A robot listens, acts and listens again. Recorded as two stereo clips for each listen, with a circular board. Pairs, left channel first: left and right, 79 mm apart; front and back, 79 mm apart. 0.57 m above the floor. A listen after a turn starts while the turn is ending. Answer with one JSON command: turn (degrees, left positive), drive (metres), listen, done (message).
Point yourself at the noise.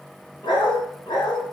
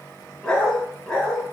{"turn": 95}
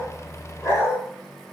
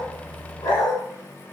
{"turn": 35}
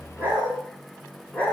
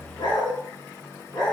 {"turn": 20}
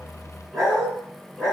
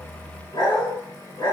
{"done": "Found it: a dog barking, straight ahead, 2 to 4 m away."}